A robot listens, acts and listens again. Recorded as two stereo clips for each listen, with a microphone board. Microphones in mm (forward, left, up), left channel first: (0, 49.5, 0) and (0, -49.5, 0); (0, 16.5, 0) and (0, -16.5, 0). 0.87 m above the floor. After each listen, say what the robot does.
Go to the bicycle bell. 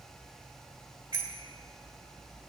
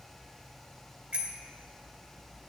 Turn 40° right.
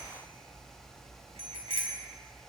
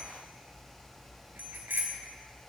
Turn 105° right.
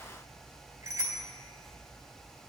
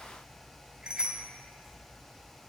Turn 25° right.
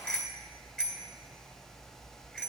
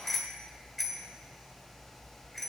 Drive 1.0 m forward.
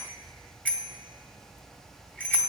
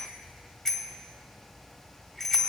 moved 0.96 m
Turn 15° left.
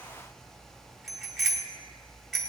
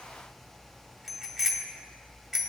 Drive 1.0 m forward.
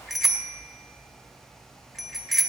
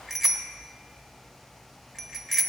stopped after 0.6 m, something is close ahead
I am next to the bicycle bell.